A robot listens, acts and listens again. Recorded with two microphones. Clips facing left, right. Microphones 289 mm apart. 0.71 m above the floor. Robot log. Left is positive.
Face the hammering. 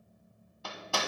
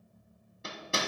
note: The hammering: about 25° right or 155° right.
cmd yaw -25
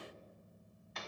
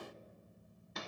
note: So it is at 130° right.
cmd yaw -130
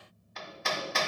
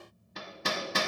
note: The hammering is now 45° right.
cmd yaw -45
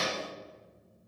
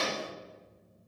note: The hammering is now 20° left.
cmd yaw +20
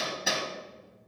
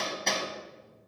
end: Found it: hammering, straight ahead, 1 to 2 m away.